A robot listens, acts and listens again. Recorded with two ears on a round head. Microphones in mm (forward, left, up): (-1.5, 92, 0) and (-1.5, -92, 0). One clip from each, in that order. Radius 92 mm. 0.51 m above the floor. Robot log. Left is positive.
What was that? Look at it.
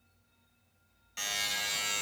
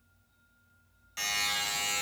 cmd yaw -30
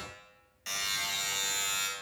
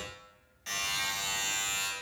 note: So it is at 20° left.
cmd yaw +20
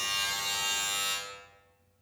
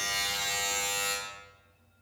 end: Found it: a buzzer, straight ahead, 1 to 2 m away.